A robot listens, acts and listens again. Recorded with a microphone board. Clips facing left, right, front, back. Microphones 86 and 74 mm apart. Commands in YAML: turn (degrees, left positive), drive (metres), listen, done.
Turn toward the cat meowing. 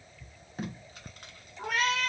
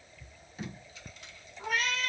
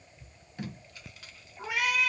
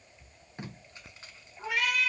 turn: 85
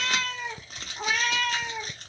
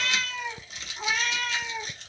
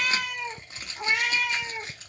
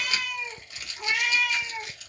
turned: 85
turn: 60
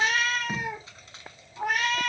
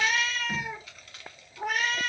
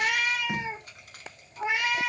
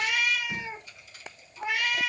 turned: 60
turn: 60
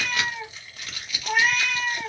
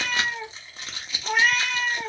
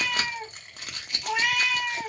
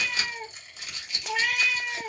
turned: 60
done: "Found it: a cat meowing, straight ahead."